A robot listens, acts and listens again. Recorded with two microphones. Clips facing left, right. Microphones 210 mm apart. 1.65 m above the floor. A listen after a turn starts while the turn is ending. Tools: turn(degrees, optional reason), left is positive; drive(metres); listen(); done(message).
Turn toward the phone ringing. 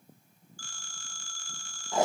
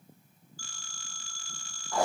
turn(degrees=50, reason="The phone ringing: about 50° left or 130° left.")
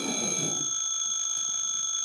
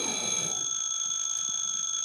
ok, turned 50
turn(degrees=70, reason="So it is at 70° left.")
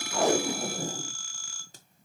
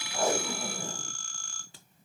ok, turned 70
done("Found it: a phone ringing, straight ahead.")